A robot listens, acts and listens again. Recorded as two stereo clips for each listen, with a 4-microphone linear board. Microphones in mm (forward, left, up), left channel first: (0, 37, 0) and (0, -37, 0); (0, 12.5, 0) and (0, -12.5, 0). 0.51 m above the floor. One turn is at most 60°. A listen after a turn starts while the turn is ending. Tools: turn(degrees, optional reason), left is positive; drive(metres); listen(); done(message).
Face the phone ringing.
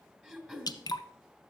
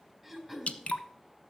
listen()
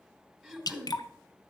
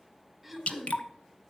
listen()
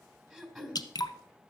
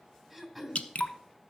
done("I can't make out a phone ringing, only throat clearing and dripping.")